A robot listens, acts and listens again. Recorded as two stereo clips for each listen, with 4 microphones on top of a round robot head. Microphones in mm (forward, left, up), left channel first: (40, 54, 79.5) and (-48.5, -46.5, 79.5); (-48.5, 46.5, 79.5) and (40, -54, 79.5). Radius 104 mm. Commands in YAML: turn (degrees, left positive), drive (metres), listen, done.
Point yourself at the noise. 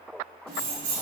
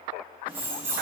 turn: -120
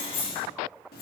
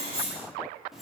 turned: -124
turn: 45
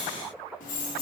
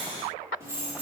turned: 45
turn: 30
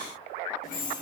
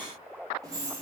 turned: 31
turn: 20
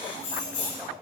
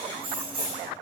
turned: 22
turn: 10
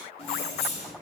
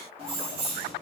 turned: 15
done: "Found it: keys jangling, straight ahead."